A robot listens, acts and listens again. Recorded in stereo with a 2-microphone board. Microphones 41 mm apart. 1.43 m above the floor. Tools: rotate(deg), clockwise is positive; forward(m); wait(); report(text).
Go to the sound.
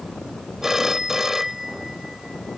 rotate(30)
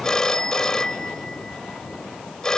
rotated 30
rotate(-15)
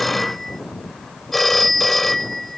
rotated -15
forward(1.0)
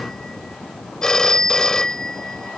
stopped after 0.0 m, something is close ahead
rotate(-15)
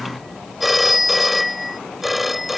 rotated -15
report("Blocked. The phone ringing is further on, straight ahead.")